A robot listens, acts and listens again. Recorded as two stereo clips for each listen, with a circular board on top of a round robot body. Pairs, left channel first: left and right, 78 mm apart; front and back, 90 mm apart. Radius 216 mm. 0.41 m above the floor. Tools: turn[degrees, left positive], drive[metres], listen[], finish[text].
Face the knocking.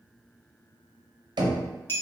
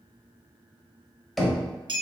Thought: The knocking: 90° right.
Action: turn[-90]
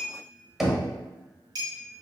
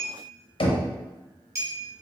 Action: finish[Found it: knocking, straight ahead, under 1 m away.]